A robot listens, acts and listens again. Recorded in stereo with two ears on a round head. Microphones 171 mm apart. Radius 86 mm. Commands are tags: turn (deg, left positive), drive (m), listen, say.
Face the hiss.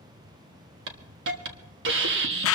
<turn deg="-60"/>
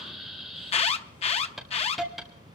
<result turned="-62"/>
<say>Facing the hiss, 1 to 2 m away.</say>